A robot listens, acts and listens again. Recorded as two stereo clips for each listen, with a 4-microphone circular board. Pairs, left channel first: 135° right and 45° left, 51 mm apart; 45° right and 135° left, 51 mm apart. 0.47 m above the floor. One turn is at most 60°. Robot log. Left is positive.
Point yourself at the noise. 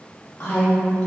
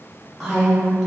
note: The woman speaking: 135° right.
cmd yaw -60
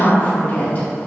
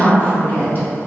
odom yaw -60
note: The woman speaking is now 85° right.
cmd yaw -60
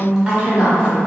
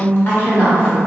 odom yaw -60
note: The woman speaking is now 10° right.
cmd yaw -10
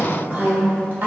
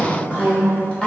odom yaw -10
note: The woman speaking is now 20° left.
cmd yaw +20
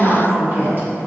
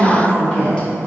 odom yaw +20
note: The woman speaking is now 20° left.
cmd yaw +20
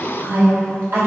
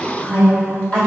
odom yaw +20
note: The woman speaking is now 15° left.
cmd yaw +15
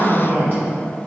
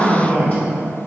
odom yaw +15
end: Found it: a woman speaking, straight ahead.